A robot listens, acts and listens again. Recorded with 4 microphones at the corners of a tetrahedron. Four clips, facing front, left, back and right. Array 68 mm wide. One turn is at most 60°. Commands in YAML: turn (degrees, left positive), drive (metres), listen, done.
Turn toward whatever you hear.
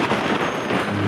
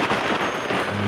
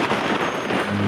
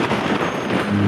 turn: -60
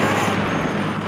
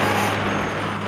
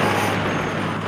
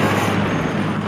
done: "Found it: a microwave, straight ahead, 1 to 2 m away."